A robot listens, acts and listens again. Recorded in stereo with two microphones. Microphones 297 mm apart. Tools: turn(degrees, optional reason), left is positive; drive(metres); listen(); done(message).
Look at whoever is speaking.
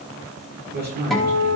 turn(degrees=-35, reason="The man speaking: about 35° right or 145° right.")
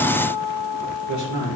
turn(degrees=-110, reason="So it is at 110° right.")
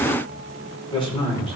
turn(degrees=15, reason="The man speaking is now 15° left.")
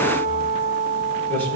done("Facing the man speaking, over 4 m away.")